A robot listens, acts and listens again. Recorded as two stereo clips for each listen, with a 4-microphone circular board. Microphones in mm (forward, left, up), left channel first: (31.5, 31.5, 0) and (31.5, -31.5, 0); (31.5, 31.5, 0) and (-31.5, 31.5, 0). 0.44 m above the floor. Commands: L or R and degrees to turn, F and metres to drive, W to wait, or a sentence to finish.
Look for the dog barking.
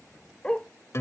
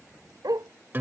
L165
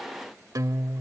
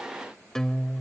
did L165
W
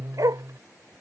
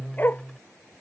R60
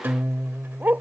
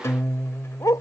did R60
R25
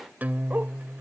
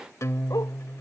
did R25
W
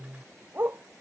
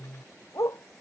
R30
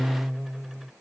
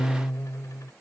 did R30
W
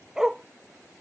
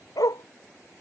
Facing the dog barking.